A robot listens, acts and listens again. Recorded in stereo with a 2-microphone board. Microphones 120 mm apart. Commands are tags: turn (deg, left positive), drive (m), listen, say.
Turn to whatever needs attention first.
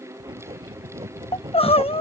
<turn deg="55"/>
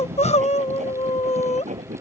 <turn deg="70"/>
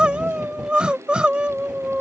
<turn deg="-10"/>
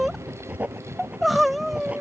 <say>Found it: crying, straight ahead.</say>